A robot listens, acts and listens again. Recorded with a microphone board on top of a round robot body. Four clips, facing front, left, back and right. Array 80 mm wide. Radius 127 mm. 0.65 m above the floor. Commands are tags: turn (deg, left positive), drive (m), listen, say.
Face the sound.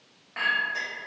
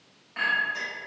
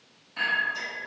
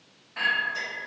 <turn deg="10"/>
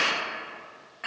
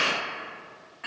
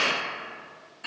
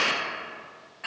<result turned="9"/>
<say>Facing the clink, 1 to 2 m away.</say>